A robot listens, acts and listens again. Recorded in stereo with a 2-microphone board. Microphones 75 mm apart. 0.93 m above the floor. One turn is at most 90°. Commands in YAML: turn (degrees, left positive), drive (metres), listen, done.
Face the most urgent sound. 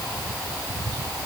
listen: true
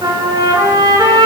listen: true
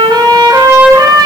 done: "I can't make out anything urgent to turn to."